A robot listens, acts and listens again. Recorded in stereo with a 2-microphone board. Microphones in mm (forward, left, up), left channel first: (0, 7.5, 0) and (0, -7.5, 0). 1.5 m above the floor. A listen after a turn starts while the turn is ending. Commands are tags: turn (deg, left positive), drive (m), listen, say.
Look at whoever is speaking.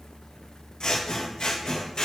<listen/>
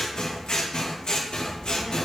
<turn deg="20"/>
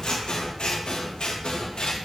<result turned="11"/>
<turn deg="10"/>
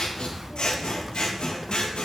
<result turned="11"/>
<say>Facing the child speaking, under 1 m away.</say>